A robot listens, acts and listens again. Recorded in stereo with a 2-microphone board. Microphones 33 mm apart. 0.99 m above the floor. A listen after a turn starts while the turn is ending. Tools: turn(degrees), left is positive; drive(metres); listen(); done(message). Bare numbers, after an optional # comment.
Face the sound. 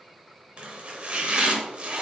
# The chopping: about 35° right or 145° right.
turn(-35)
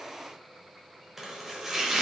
# So it is at 10° right.
turn(-10)
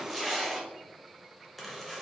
done("Found it: chopping, straight ahead, under 1 m away.")